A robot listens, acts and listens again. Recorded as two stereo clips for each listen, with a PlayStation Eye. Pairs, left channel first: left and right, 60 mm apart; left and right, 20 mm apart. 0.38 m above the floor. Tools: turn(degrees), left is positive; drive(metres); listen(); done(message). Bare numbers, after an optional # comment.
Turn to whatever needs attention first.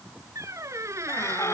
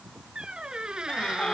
# The scream: about 50° left or 130° left.
turn(50)
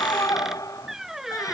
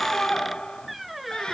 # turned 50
# So it is at 75° left.
turn(75)
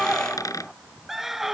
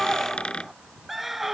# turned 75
done("Facing the scream.")